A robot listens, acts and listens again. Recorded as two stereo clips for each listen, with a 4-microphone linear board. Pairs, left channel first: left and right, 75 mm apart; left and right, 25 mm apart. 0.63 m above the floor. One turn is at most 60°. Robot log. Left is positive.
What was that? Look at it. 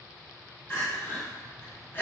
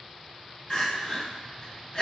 note: The crying: about 35° left or 145° left.
cmd yaw +35
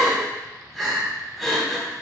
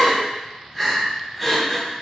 end: Facing the crying, 1 to 2 m away.